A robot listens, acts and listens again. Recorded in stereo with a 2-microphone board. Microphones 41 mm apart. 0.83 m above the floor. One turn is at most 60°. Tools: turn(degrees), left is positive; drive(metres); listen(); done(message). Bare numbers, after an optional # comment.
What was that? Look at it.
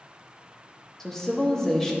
turn(30)
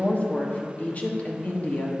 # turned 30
# So it is at 140° left.
turn(60)
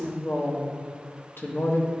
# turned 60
# The woman speaking is now 75° left.
turn(60)
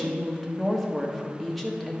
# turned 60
done("Facing the woman speaking.")